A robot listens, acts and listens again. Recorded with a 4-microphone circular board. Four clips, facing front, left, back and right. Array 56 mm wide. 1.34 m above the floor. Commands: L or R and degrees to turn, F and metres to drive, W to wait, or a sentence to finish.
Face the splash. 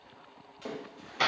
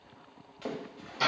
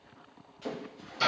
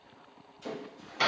L75
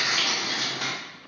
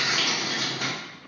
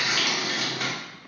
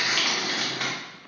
I heard a splash from this way, but can't make it out now.